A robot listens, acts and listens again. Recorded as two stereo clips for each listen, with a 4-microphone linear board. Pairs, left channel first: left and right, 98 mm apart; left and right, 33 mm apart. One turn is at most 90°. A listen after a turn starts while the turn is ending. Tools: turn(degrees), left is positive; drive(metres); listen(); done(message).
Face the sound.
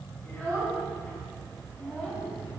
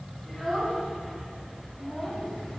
turn(degrees=30)
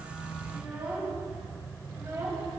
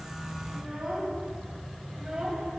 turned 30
turn(degrees=-30)
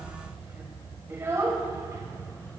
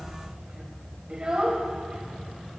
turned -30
turn(degrees=-30)
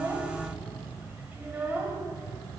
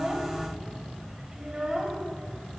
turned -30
turn(degrees=-20)
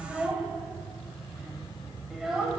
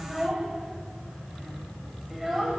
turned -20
done("Facing the child speaking.")